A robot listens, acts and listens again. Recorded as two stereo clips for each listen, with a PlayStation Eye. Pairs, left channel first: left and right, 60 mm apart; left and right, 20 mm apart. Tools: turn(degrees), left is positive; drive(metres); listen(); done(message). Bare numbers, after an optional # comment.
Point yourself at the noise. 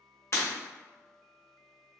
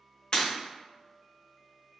# The breaking glass: about 50° left or 130° left.
turn(50)
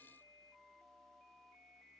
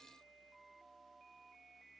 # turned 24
listen()
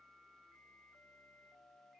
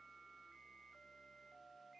done("I heard breaking glass, but can't make it out now. It was about 25° left or 110° left.")